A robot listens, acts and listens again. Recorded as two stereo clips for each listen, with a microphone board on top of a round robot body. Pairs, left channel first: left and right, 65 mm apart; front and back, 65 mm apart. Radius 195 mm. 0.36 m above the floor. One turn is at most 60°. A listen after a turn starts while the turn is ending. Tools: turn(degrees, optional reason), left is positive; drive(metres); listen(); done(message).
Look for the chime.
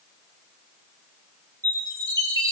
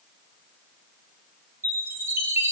turn(degrees=-60, reason="The chime: 125° right.")
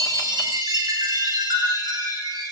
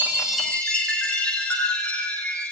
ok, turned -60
turn(degrees=-60, reason="The chime is now 75° right.")
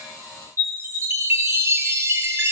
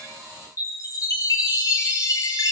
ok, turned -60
turn(degrees=-40, reason="The chime is now 40° right.")
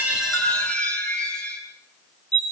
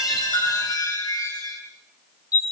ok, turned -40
turn(degrees=15, reason="The chime is now 15° left.")
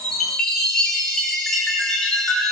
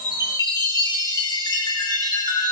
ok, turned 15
done("Facing the chime, over 4 m away.")